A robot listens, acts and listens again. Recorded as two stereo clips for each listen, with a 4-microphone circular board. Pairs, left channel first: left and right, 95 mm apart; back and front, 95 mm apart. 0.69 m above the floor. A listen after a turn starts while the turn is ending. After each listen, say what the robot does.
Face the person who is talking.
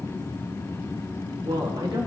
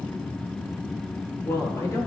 Turn 120° right.
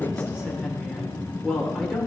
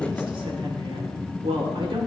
Facing the woman speaking, 1 to 2 m away.